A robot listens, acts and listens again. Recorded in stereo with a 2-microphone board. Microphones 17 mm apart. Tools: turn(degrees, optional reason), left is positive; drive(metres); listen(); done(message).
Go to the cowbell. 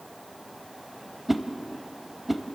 listen()
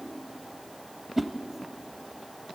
listen()
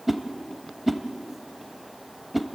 done("I can't make out a cowbell, only a whoosh.")